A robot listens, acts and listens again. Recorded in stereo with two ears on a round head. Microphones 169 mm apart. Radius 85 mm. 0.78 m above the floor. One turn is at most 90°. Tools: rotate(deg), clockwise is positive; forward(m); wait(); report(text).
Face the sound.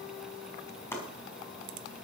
rotate(-30)
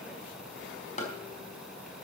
rotate(-90)
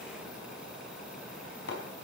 rotate(-60)
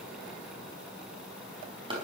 rotate(25)
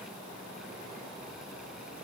wait()
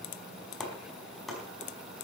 report("Facing the chopping, over 4 m away.")